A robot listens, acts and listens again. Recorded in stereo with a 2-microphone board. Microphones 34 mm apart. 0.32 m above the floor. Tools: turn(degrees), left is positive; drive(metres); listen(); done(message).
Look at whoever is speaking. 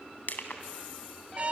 listen()
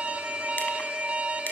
listen()
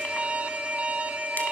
done("I can't make out anyone speaking, only crushing and an alarm.")